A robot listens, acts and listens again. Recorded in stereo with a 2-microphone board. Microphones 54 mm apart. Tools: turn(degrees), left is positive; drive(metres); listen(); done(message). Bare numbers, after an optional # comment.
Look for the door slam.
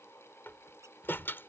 # The door slam: about 45° left or 135° left.
turn(45)
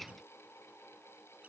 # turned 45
listen()
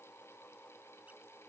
done("I heard a door slam, but can't make it out now. It was about straight ahead or 90° left.")